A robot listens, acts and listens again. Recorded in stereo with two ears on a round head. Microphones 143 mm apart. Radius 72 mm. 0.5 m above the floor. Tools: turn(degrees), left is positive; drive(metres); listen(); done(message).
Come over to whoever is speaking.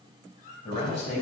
turn(degrees=45)
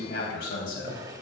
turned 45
turn(degrees=85)
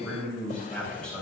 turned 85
drive(metres=1.0)
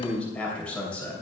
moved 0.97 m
turn(degrees=10)
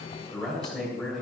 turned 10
drive(metres=1.0)
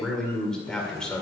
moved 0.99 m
drive(metres=1.0)
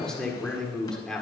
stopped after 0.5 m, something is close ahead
done("Arrived at the man speaking, straight ahead.")